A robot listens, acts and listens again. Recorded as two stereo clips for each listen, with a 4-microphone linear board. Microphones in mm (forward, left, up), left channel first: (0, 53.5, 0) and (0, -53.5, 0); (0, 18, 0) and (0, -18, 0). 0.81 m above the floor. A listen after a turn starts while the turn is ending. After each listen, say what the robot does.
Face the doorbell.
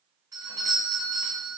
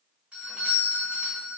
Turn 30° right.
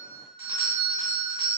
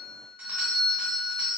Turn 110° right.
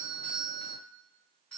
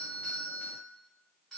Turn 10° left.
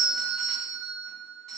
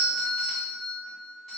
Found it: a doorbell, straight ahead.